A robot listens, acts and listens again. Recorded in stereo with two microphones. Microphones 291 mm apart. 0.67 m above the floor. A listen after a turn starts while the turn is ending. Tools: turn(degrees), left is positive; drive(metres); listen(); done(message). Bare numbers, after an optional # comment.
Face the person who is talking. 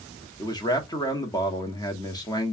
turn(30)
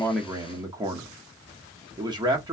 # So it is at 15° right.
turn(-15)
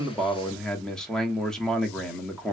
done("Found it: a man speaking, straight ahead, 1 to 2 m away.")